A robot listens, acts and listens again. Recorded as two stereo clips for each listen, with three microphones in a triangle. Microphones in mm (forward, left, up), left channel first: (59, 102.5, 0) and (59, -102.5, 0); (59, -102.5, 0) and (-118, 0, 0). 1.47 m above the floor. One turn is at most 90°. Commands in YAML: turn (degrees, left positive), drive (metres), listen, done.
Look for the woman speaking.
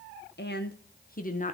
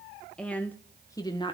turn: 35
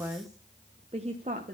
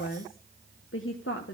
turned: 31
turn: -40
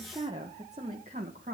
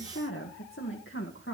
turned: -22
turn: -40
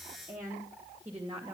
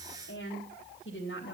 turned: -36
turn: -20
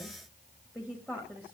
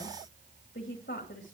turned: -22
done: "Found it: a woman speaking, straight ahead."